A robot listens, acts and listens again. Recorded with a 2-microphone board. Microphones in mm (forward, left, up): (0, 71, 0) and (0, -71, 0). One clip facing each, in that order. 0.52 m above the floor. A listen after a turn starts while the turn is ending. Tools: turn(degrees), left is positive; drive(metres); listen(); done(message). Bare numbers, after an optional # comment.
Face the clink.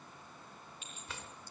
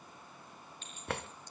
turn(30)
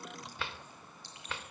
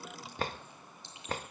# So it is at 20° right.
turn(-20)
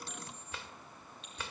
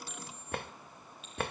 listen()
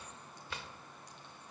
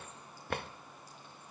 listen()
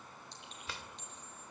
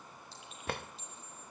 done("Found it: a clink, straight ahead, over 4 m away.")